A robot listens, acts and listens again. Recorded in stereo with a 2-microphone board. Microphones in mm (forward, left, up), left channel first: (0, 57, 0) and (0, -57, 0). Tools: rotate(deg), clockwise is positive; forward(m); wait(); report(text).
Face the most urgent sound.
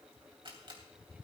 wait()
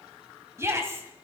rotate(25)
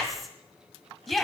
report("Facing the shout.")